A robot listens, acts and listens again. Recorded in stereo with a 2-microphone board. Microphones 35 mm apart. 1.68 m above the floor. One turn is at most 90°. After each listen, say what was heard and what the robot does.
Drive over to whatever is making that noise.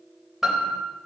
Turn 30° right.
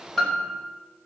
So it is at 15° left. Turn 15° left.
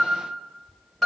The piano is now 10° left. Turn 10° left.
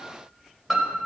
Drive 1.0 m forward.
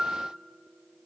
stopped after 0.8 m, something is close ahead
The piano is now 10° right. Turn 10° right.
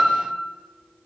Something is in my way. I am facing the piano but have not reached it.